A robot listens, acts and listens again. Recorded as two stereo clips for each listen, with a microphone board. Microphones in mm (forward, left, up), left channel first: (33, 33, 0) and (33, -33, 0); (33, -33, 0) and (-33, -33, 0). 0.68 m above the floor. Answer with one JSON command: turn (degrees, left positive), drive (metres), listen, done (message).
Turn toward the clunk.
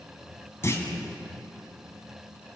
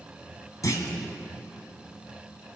{"turn": 35}
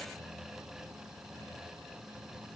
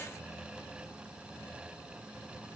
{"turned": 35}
{"done": "I heard a clunk from this way, but can't make it out now."}